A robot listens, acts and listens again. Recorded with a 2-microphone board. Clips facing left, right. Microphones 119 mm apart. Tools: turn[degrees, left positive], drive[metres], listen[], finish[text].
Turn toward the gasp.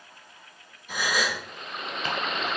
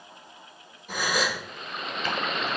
Thought: The gasp: about 50° right or 130° right.
Action: turn[-50]
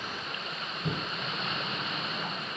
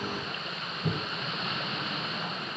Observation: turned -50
Action: listen[]
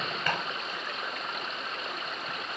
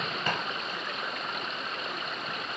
Action: finish[I heard a gasp, but can't make it out now. It was about straight ahead or 80° right.]